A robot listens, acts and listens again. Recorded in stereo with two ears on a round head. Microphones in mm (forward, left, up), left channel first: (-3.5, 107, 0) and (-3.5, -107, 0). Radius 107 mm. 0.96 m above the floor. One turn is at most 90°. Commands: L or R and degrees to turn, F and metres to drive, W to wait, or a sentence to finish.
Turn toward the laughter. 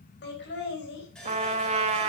L50
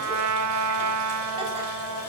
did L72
W
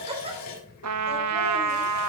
R25
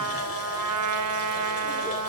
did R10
R15
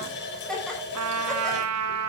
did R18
Facing the laughter, over 4 m away.